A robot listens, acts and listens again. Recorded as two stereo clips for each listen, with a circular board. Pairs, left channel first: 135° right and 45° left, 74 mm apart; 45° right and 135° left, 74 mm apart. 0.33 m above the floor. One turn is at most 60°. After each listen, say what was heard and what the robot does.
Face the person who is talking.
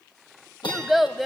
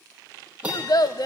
The child speaking: 45° right. Turn 45° right.
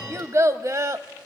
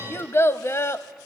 Facing the child speaking.